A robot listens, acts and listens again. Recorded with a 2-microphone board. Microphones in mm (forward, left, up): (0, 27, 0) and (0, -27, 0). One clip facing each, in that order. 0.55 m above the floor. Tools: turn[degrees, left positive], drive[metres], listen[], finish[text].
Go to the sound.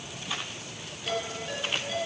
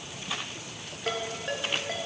Thought: The ringtone: about 50° right or 130° right.
Action: turn[-50]
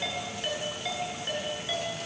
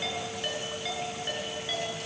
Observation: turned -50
Action: drive[1.0]
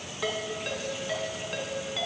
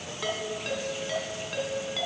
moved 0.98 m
Action: drive[1.0]
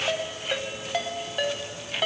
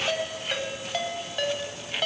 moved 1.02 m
Thought: The ringtone is now 10° left.
Action: turn[10]
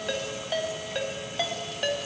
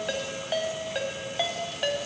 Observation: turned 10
Action: drive[1.0]
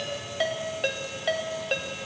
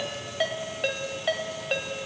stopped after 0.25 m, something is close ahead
Action: finish[Arrived at the ringtone, straight ahead.]